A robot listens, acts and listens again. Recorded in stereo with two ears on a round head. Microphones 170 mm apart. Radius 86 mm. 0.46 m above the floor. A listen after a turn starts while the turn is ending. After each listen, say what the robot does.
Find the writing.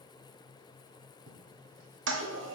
Keep listening.
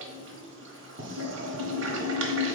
Turn 45° right.
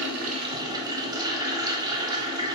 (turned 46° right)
Keep listening.
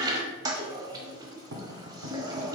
Turn 85° right.
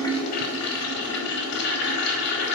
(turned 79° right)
Turn 10° right.
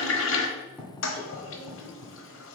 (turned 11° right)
Facing the writing, 1 to 2 m away.